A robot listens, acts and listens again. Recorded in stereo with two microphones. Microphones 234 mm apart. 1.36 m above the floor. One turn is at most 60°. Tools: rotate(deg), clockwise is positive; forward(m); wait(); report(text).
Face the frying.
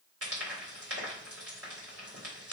rotate(60)
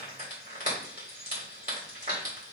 rotate(35)
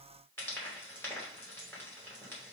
rotate(-10)
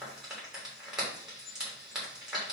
report("Facing the frying.")